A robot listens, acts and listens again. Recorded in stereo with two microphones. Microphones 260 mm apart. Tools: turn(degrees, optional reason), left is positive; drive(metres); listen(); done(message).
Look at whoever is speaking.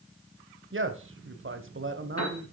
turn(degrees=-50, reason="The man speaking: about 50° right or 130° right.")
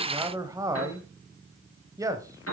turn(degrees=-15, reason="So it is at 15° right.")
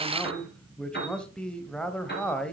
done("Found it: a man speaking, straight ahead, 1 to 2 m away.")